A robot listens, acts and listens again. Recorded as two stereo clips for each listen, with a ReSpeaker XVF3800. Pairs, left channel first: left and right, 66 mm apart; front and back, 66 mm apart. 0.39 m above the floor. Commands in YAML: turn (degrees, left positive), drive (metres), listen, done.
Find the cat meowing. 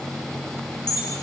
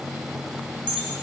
listen: true
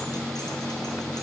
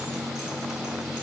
listen: true
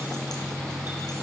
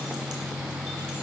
done: "I can't make out a cat meowing to turn to."